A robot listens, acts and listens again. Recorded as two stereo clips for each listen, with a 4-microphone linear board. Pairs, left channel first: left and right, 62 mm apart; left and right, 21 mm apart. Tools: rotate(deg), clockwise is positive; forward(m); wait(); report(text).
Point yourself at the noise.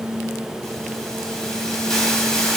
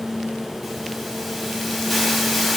rotate(-30)
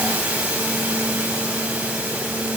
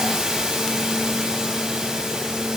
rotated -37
rotate(25)
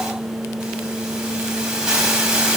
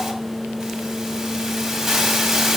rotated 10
rotate(15)
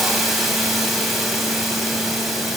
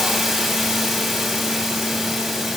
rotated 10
report("Facing the hiss.")